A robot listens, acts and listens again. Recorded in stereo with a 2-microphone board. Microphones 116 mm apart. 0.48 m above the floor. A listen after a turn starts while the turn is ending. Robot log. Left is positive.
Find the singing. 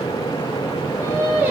note: The singing: about 15° right or 165° right.
cmd yaw -15
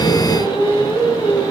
cmd yaw -30
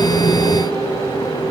cmd idle
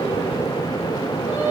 note: The singing: about 15° right or 165° right.
cmd yaw -15
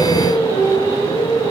note: The singing: about 25° right or 155° right.
cmd yaw -25
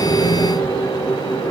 note: So it is at 135° right.
cmd yaw -135
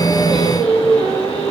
note: The singing is now 10° left.
cmd yaw +10
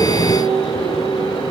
end: Facing the singing, 2 to 4 m away.